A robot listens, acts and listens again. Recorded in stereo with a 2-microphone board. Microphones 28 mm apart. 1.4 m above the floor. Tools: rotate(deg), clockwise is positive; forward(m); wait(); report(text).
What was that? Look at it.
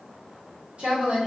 rotate(55)
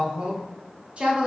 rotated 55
rotate(45)
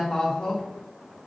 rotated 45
rotate(-30)
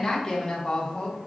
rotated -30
rotate(-30)
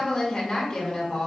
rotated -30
rotate(-10)
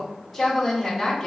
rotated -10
report("Found it: a woman speaking, straight ahead, 1 to 2 m away.")